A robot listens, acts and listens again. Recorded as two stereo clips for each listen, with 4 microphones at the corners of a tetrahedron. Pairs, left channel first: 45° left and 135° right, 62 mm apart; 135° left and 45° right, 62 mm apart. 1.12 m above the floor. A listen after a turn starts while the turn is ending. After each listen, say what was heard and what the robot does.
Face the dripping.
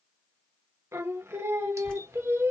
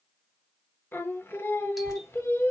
The dripping: 120° left. Turn 120° left.
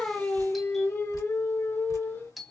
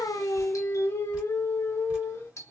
The dripping is now 25° left. Turn 25° left.
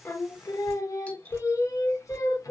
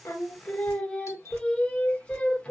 Facing the dripping, 2 to 4 m away.